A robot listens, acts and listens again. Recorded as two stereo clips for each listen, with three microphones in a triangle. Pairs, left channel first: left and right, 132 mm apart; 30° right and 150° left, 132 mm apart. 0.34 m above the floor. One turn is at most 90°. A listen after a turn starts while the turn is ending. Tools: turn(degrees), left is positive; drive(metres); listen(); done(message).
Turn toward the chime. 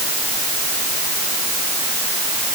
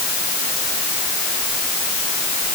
listen()
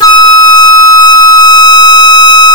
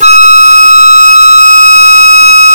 listen()
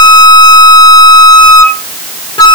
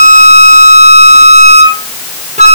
done("I can't make out a chime, only a flute.")